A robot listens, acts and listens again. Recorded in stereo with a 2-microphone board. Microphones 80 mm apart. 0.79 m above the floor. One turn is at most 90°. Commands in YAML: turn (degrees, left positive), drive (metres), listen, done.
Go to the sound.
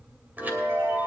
turn: -25
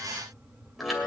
drive: 1.0
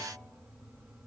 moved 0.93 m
listen: true
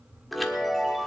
drive: 1.0
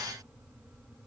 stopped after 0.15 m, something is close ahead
listen: true
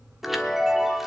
done: "Arrived at the chime, straight ahead."